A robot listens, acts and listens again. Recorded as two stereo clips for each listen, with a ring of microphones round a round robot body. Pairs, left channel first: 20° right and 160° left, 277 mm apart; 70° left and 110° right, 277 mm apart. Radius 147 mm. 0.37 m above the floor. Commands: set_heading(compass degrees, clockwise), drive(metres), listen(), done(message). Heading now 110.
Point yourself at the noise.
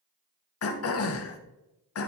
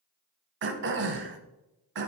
set_heading(175)
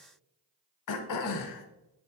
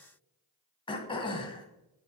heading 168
done("Facing the throat clearing.")